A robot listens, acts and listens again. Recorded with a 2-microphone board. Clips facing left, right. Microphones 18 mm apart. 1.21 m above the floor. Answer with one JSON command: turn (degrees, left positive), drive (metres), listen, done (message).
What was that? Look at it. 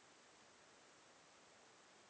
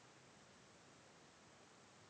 {"listen": true}
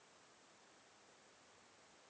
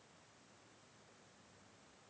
{"listen": true}
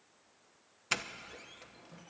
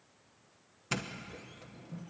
{"turn": 20}
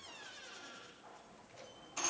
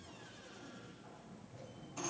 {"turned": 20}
{"turn": 135}
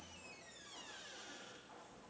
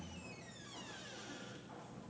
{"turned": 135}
{"listen": true}
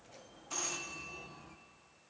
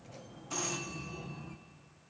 {"turn": -10}
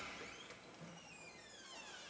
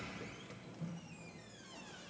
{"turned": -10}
{"done": "Found it: a doorbell, straight ahead."}